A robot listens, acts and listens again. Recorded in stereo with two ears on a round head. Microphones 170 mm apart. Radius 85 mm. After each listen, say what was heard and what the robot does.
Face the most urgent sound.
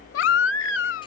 The baby crying: about 70° left or 110° left. Turn 70° left.
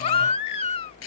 So it is at 30° left. Turn 30° left.
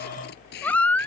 The baby crying is now 10° left. Turn 10° left.
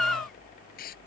Found it: a baby crying, straight ahead.